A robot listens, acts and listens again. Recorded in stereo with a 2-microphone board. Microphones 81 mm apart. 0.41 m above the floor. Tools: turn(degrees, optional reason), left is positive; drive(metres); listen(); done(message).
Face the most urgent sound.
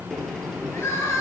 turn(degrees=35, reason="The crying: about 35° left or 145° left.")
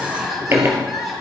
done("Found it: crying, straight ahead.")